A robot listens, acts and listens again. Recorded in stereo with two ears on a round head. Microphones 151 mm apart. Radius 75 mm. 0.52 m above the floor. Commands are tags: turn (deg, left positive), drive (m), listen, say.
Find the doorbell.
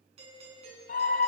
<turn deg="-40"/>
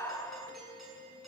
<say>Found it: a doorbell, straight ahead.</say>